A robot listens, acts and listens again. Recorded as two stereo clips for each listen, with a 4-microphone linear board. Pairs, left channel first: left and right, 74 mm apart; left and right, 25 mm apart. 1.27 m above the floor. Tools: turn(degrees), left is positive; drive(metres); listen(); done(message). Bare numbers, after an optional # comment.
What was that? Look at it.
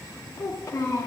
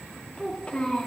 # The child speaking: about 40° left or 140° left.
turn(40)
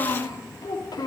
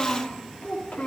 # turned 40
# So it is at 110° left.
turn(110)
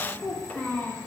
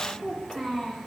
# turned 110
# The child speaking is now 20° left.
turn(20)
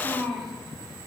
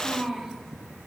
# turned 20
done("Found it: a child speaking, straight ahead, 2 to 4 m away.")